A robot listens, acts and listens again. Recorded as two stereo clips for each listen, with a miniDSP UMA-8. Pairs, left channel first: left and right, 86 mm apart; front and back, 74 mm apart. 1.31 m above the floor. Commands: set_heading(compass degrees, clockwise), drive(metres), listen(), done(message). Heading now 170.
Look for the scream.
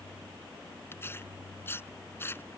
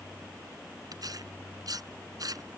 listen()
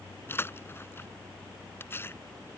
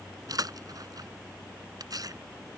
listen()
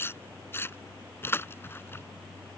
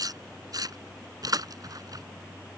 done("I can't make out a scream, only tearing paper.")